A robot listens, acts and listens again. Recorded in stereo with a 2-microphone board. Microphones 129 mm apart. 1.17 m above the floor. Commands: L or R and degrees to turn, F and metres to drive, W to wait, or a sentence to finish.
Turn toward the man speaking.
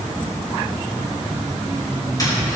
W
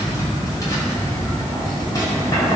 W
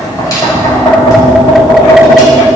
I can't make out a man speaking to turn to.